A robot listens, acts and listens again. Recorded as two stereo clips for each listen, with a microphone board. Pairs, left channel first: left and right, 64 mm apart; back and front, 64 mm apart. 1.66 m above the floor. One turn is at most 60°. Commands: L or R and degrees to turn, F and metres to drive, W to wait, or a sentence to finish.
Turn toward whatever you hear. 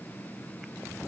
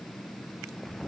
W
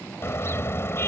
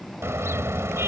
L45
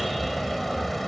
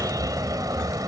Found it: a car horn, straight ahead.